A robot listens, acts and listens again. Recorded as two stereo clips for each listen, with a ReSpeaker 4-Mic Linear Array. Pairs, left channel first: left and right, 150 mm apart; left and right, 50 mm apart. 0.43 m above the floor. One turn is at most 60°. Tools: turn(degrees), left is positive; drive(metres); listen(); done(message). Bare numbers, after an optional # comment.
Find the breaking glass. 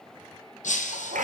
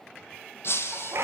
# The breaking glass: about 55° left or 125° left.
turn(55)
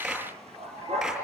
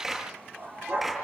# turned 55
listen()
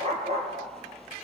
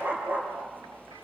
done("I heard breaking glass, but can't make it out now. It was about straight ahead or 70° left.")